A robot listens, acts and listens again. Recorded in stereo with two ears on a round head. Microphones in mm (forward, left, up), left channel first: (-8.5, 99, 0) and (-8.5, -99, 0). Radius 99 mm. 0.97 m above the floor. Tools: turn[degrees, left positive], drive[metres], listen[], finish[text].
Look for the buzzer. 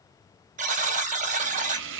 Thought: The buzzer: about 35° right or 145° right.
Action: turn[-35]
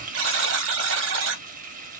Thought: So it is at 105° right.
Action: turn[-105]
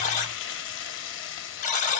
Thought: The buzzer is now 40° left.
Action: turn[40]
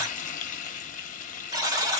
Thought: The buzzer is now 15° right.
Action: turn[-15]
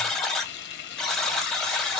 Action: finish[Facing the buzzer.]